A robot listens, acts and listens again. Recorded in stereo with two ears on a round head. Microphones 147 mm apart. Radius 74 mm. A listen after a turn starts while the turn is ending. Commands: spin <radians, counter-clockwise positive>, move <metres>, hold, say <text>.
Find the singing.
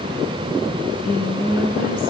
spin 1.05
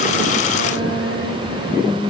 spin 1.05
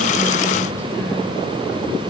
hold
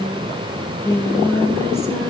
spin 0.26
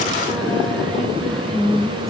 say Facing the singing.